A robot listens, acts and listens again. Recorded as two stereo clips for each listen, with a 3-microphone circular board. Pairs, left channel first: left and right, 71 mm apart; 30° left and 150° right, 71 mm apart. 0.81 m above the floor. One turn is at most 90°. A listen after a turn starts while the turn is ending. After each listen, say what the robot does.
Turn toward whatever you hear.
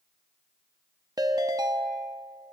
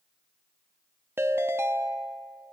Turn 90° right.
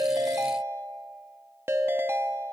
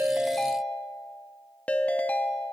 Turn 40° right.
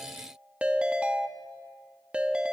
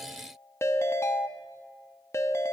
Turn 15° right.
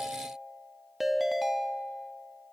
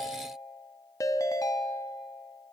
Found it: a ringtone, straight ahead.